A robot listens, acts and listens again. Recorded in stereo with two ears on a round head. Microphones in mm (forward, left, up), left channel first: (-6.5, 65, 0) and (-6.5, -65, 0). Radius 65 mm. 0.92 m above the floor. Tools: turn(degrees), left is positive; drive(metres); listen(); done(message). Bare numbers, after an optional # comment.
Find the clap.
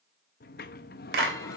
turn(-90)
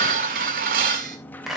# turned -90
done("Found it: a clap, straight ahead.")